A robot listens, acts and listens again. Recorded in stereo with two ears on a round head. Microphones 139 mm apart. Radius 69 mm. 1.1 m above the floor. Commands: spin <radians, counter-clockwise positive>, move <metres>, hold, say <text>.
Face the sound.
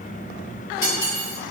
spin 0.70
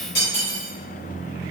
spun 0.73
spin 1.66
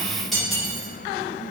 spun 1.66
say Facing the cutlery clinking, 1 to 2 m away.